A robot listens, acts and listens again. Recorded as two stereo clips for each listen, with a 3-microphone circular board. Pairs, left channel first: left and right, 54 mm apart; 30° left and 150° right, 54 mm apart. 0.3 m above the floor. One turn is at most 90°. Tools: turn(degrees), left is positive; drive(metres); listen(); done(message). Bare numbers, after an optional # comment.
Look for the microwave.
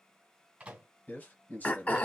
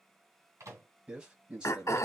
# The microwave: 160° right.
turn(-90)
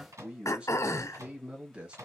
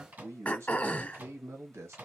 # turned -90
# The microwave is now 100° right.
turn(-90)
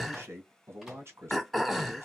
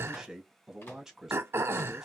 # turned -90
# Nothing new. It was at 10° right.
turn(-10)
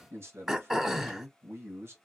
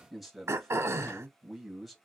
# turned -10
listen()
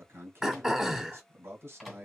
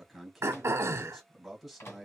done("Facing the microwave, 1 to 2 m away.")